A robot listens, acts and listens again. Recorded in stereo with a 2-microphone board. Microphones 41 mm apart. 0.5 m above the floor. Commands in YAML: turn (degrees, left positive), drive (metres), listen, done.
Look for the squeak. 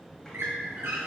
turn: -70
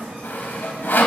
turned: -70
listen: true
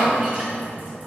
listen: true
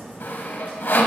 done: "I heard a squeak, but can't make it out now. It was about straight ahead or 40° right."